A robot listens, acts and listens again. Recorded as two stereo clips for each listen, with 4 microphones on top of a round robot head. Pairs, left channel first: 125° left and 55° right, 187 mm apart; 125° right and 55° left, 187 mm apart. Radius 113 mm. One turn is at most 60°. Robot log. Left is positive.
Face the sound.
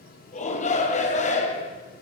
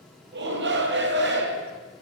note: The shout: 75° left.
cmd yaw +60
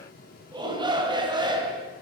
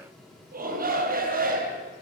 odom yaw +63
note: The shout is now 15° left.
cmd yaw +15
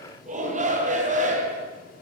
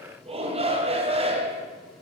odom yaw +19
end: Facing the shout.